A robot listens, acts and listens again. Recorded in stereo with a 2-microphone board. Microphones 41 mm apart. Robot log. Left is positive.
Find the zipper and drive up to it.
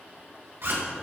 note: The zipper: about 65° right or 115° right.
cmd yaw -65
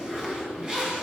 note: So it is at 20° right.
cmd yaw -20
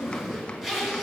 cmd fwd 1.0
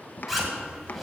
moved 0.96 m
cmd fwd 1.0
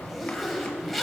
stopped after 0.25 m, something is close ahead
end: Arrived at the zipper, straight ahead.